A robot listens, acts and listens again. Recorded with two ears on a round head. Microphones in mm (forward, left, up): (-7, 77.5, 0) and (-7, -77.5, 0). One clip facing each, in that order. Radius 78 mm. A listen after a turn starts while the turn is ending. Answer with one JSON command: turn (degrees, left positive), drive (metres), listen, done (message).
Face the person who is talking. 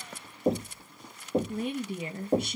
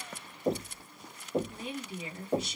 {"turn": 45}
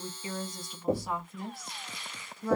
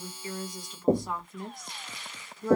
{"done": "Facing the woman speaking."}